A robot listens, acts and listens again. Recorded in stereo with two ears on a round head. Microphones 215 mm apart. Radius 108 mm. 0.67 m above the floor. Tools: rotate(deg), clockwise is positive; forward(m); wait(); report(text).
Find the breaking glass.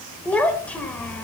wait()
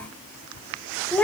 wait()
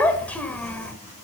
report("I can't make out breaking glass to turn to.")